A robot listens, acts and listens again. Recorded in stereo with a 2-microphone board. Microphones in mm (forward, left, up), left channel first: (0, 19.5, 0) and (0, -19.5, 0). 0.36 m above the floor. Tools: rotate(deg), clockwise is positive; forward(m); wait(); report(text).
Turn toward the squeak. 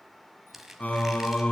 rotate(30)
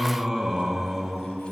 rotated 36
wait()
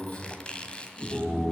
rotate(-25)
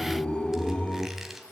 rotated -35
rotate(10)
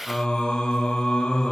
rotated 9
wait()
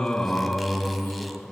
report("Facing where the squeak came from. I can't hear it now.")